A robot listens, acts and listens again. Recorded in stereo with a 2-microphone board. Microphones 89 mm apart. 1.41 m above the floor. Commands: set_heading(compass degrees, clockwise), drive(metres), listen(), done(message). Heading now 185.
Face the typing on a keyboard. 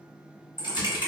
set_heading(125)
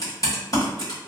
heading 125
set_heading(75)
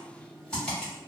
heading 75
set_heading(65)
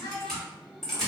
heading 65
done("Found it: typing on a keyboard, straight ahead.")